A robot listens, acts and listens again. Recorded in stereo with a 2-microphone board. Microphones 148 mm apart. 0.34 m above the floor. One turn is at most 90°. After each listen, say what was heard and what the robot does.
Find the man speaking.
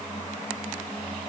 Keep listening.
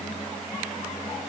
Keep listening.
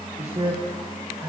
The man speaking: about 40° right or 140° right. Turn 40° right.
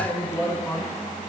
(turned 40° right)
So it is at 10° left. Turn 10° left.
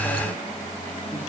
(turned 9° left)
Keep listening.
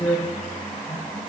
The man speaking is now 20° left. Turn 20° left.
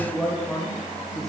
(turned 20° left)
Found it: a man speaking, straight ahead.